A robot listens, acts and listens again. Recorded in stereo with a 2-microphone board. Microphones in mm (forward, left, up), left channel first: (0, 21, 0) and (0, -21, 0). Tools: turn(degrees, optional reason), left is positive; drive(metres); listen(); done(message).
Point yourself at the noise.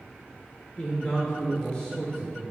turn(degrees=30)
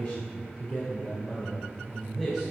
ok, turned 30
turn(degrees=20, reason="The man speaking: about 20° left or 160° left.")
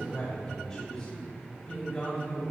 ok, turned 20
turn(degrees=150, reason="So it is at 150° left.")
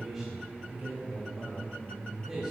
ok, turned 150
turn(degrees=-15, reason="The man speaking is now 15° right.")
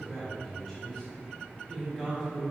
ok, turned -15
done("Found it: a man speaking, straight ahead, 2 to 4 m away.")